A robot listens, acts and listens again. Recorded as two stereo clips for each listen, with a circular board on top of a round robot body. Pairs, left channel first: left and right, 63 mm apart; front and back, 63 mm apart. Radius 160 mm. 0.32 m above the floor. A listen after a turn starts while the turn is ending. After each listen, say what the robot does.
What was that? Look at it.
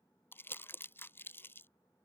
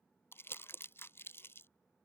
Turn 45° left.
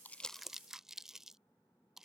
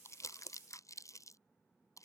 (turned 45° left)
Turn 10° right.
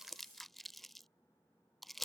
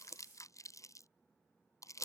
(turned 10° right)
Facing the crumpling.